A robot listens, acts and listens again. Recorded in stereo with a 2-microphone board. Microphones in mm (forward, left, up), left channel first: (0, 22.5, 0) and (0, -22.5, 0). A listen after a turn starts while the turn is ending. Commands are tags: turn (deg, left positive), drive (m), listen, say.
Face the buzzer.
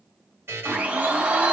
<turn deg="-60"/>
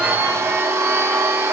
<listen/>
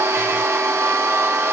<listen/>
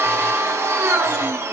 <say>I heard a buzzer, but can't make it out now. It was about straight ahead or 60° right.</say>